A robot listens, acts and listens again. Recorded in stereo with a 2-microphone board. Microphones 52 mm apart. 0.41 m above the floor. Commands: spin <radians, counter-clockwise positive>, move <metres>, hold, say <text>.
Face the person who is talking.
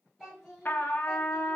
spin -0.52
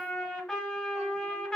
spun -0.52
hold
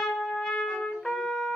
hold
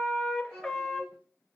spin -2.62
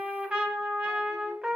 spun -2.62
hold
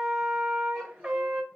hold
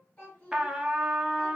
spin 0.52
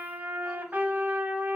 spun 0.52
hold
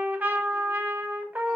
hold
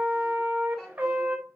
say Facing where the child speaking came from. I can't hear it now.